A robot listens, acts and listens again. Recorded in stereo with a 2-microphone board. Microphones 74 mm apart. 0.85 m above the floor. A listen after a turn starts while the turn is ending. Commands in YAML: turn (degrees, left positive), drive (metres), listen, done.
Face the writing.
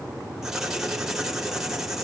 turn: -30
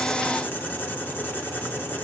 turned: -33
turn: 25
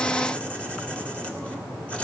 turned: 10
turn: 15
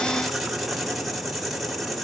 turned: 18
done: "Found it: writing, straight ahead, 2 to 4 m away."